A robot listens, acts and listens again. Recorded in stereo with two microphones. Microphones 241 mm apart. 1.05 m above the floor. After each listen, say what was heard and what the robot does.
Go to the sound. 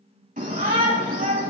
The shout: about 35° right or 145° right. Turn 35° right.
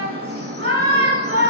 So it is at 110° right. Turn 110° right.
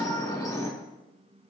The shout is now 15° left. Turn 15° left.
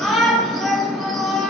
Drive 1.0 m forward.
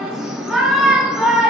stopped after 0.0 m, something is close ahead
Blocked. The shout is further on, straight ahead.